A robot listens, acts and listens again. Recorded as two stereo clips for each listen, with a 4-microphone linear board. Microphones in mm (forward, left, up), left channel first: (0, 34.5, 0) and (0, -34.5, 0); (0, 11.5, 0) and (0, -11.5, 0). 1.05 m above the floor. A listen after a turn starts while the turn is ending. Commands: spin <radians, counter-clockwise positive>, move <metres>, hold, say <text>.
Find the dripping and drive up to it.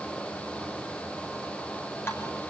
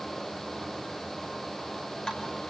spin 0.61
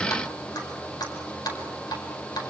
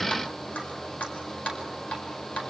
spin 1.92
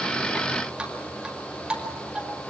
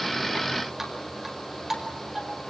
spin -0.26
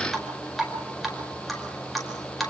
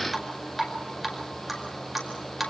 move 1.0
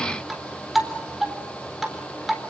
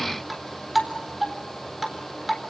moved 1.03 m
move 1.0
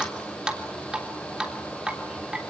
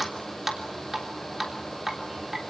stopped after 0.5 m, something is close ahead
spin -0.17
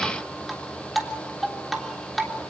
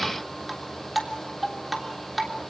say Something is in my way. I am facing the dripping but have not reached it.